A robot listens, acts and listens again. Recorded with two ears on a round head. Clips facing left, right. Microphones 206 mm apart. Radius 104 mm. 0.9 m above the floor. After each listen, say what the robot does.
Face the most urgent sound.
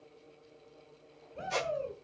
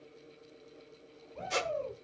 Turn 30° left.
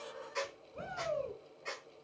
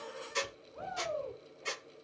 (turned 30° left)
Turn 145° left.
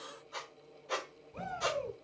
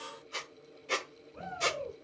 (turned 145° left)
Turn 50° left.
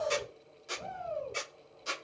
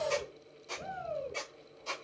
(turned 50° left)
Facing the shout.